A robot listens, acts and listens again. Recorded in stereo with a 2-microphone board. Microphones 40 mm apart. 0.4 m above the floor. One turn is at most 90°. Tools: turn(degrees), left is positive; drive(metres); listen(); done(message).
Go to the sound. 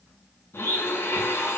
turn(degrees=70)
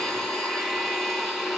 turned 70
drive(metres=1.0)
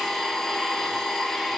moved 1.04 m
drive(metres=1.0)
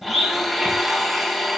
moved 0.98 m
drive(metres=1.0)
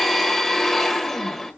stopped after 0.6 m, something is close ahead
done("I am next to the blender.")